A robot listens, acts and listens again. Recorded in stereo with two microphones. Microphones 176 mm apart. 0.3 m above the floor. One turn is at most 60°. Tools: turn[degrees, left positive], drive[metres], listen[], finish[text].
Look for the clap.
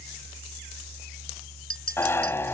Action: listen[]
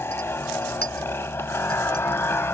Action: listen[]
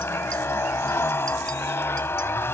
Action: finish[I can't make out a clap to turn to.]